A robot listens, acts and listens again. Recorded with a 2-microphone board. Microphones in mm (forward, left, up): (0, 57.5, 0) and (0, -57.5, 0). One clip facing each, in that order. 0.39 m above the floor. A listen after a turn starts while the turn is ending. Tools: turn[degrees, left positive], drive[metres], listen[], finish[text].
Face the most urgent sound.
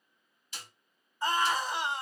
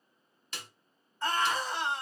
Action: turn[30]
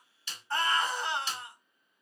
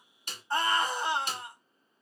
Thought: So it is at 15° right.
Action: turn[-15]
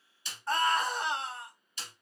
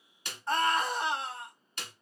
Action: finish[Facing the scream.]